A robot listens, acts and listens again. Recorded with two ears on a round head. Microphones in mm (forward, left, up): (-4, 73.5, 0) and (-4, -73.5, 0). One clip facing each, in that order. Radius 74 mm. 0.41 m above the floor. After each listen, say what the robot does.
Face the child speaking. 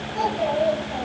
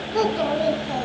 Turn 90° right.
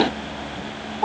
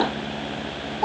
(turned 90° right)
Turn 15° right.
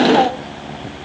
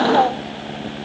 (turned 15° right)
Keep listening.
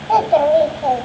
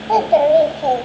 Turn 20° right.
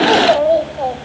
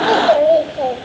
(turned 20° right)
Turn 30° right.
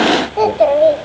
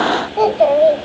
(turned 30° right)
Facing the child speaking.